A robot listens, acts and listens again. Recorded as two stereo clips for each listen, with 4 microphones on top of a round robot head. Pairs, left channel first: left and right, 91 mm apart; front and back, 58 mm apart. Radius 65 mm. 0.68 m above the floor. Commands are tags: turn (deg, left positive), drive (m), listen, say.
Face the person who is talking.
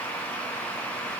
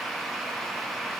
<listen/>
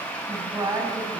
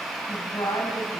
<turn deg="-40"/>
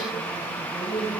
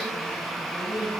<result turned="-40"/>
<turn deg="-10"/>
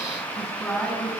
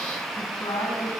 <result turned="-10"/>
<say>Found it: a woman speaking, straight ahead.</say>